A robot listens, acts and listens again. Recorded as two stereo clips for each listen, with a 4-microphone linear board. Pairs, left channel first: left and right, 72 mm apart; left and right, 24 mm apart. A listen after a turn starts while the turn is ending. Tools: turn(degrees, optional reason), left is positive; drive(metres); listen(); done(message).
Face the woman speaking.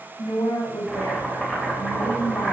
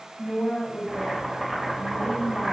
turn(degrees=75, reason="The woman speaking: about 75° left or 105° left.")
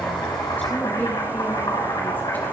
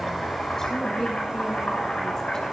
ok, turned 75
turn(degrees=25, reason="So it is at 25° left.")
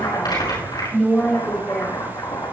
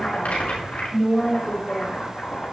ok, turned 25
turn(degrees=10, reason="The woman speaking is now 10° left.")
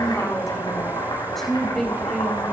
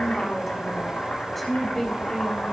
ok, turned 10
done("Found it: a woman speaking, straight ahead, 2 to 4 m away.")